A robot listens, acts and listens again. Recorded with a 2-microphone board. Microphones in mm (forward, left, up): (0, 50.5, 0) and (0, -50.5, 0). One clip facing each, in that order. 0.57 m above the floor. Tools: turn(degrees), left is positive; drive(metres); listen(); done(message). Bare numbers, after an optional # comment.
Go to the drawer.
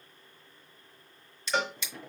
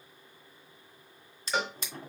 # The drawer: about 40° right or 140° right.
turn(-40)
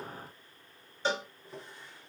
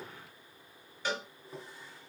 drive(1.0)
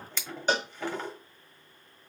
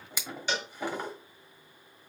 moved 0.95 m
# The drawer is now 10° right.
turn(-10)
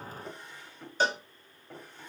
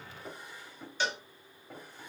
drive(1.0)
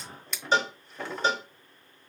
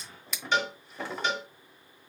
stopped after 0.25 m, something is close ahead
done("Arrived at the drawer, straight ahead.")